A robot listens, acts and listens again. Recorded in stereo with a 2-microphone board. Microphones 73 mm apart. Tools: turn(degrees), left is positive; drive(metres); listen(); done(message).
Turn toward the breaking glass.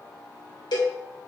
listen()
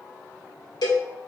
listen()
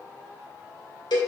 done("I can't make out breaking glass, only a cowbell.")